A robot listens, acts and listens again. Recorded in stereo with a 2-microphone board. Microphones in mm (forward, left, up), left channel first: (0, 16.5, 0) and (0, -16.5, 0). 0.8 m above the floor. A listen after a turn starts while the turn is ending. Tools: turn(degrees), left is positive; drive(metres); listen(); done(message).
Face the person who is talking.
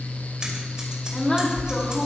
turn(degrees=20)
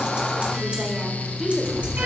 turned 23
done("Facing the woman speaking.")